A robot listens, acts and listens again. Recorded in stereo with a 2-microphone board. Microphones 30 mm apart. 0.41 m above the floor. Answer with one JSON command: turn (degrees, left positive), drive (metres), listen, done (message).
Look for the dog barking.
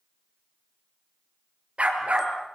{"turn": -45}
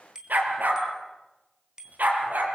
{"turn": -105}
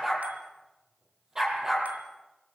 {"turn": -20}
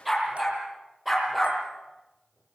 {"done": "Found it: a dog barking, straight ahead."}